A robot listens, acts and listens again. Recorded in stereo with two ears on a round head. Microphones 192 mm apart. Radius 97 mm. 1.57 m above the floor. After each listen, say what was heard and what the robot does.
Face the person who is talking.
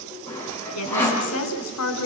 Turn 90° left.
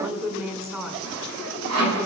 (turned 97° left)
So it is at 10° right. Turn 10° right.
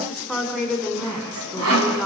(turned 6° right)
Facing the woman speaking.